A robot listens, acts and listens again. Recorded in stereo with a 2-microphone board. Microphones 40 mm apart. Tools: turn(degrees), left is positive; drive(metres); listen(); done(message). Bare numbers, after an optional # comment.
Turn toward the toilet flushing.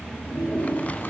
# The toilet flushing: about 65° left or 115° left.
turn(65)
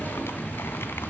listen()
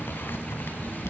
listen()
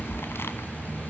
done("I heard a toilet flushing, but can't make it out now. It was about straight ahead or 50° left.")